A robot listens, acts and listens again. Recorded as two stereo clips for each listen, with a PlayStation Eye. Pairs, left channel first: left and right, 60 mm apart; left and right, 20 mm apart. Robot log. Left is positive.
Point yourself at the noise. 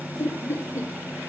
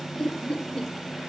note: The laughter: about 50° left or 130° left.
cmd yaw +50
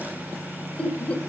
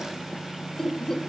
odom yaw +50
note: So it is at 25° left.
cmd yaw +25
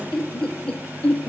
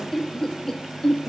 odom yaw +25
note: The laughter is now 20° left.
cmd yaw +20
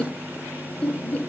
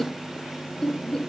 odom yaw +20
note: The laughter is now 25° left.
cmd yaw +25
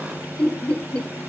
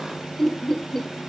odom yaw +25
note: The laughter is now 20° left.
cmd yaw +20
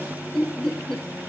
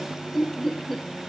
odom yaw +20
note: The laughter is now 10° left.
cmd yaw +10
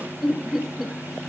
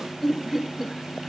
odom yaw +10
end: Facing the laughter.